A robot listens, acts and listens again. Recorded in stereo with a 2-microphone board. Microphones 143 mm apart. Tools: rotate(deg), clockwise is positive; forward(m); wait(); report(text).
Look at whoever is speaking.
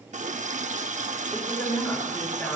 rotate(-30)
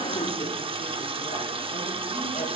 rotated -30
wait()
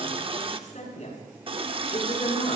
rotate(-125)
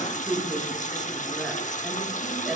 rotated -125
report("Found it: a woman speaking, straight ahead, over 4 m away.")